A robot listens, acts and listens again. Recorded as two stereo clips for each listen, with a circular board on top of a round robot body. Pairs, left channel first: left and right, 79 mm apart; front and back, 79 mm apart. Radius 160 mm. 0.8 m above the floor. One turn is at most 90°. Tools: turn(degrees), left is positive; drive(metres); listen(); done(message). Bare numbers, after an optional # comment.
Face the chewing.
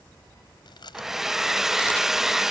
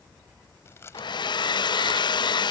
# The chewing: 60° left.
turn(60)
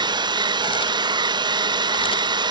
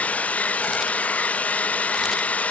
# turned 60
listen()
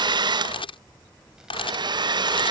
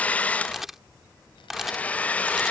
listen()
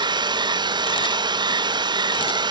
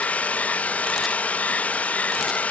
done("I heard chewing from this way, but can't make it out now.")